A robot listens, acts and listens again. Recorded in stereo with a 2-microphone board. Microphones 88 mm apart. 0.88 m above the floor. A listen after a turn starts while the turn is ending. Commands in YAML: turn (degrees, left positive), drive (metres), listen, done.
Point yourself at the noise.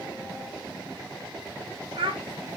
turn: -90
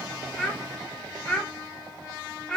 turn: 10
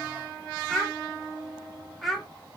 done: "Found it: a child speaking, straight ahead, 1 to 2 m away."